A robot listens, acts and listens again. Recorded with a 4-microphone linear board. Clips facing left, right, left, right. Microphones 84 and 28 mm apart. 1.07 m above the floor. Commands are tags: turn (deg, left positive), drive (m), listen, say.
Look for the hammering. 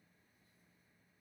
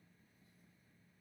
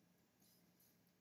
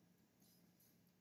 <listen/>
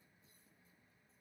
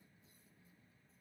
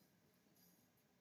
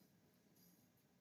<listen/>
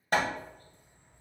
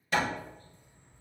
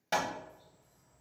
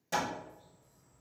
<turn deg="45"/>
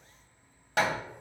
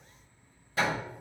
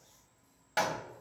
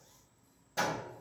<turn deg="95"/>
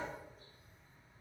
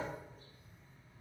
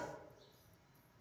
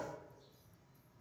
<listen/>
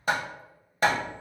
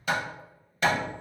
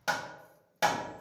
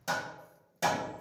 <turn deg="40"/>
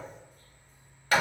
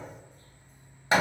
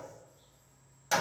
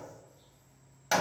<turn deg="-20"/>
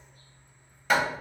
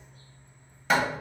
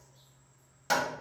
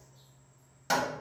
<say>Found it: hammering, straight ahead, under 1 m away.</say>